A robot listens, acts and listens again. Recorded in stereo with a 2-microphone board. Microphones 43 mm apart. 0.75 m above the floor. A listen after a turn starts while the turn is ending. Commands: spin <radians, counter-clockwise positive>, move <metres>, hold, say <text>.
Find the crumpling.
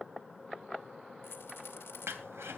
spin -1.57
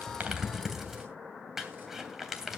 spin -0.17
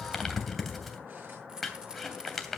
say Facing the crumpling.